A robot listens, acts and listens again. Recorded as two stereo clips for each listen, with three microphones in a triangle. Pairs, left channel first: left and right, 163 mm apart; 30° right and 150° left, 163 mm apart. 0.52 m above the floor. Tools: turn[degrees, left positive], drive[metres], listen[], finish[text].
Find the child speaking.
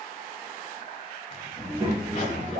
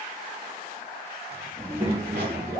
Thought: The child speaking: 145° right.
Action: turn[-145]
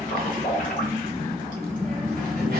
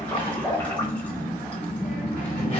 Action: finish[Found it: a child speaking, straight ahead.]